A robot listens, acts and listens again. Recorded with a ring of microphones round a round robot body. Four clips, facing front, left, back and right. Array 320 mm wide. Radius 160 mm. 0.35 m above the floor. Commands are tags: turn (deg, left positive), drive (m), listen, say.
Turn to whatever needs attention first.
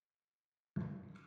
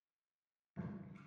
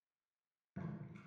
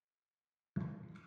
<listen/>
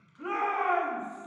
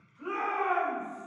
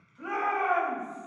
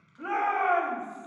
<turn deg="-105"/>
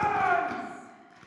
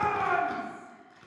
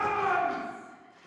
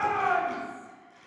<turn deg="-25"/>
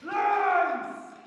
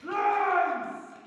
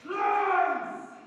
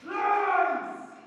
<say>Facing the shout, 2 to 4 m away.</say>